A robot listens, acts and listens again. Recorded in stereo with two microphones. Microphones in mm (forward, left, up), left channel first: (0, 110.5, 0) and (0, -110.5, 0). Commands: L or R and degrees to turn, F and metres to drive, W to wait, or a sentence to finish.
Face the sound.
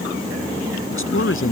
L70
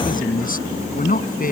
L40
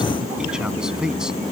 Found it: a man speaking, straight ahead.